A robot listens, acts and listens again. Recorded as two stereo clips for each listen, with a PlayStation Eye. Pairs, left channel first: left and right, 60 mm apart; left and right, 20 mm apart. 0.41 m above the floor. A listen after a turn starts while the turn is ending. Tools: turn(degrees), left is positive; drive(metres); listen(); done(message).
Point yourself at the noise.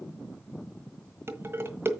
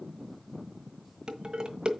turn(degrees=-40)
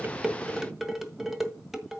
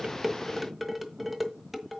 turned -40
done("Found it: dishes clattering, straight ahead.")